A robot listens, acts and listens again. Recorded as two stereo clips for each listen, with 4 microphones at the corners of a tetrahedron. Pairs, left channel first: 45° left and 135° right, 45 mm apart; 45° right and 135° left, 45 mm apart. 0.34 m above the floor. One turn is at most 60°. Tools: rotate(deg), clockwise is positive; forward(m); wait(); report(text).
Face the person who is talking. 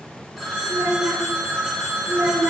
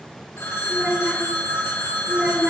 rotate(60)
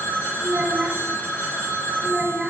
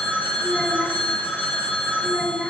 rotate(60)
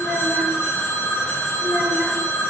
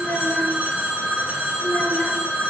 rotate(30)
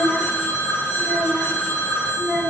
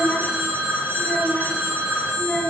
report("Found it: a child speaking, straight ahead.")